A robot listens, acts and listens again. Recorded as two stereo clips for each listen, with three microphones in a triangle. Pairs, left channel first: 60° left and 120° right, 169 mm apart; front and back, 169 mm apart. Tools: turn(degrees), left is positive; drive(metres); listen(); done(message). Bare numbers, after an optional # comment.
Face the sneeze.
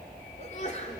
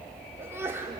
# The sneeze: 105° left.
turn(105)
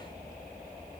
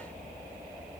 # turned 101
done("I heard a sneeze from this way, but can't make it out now.")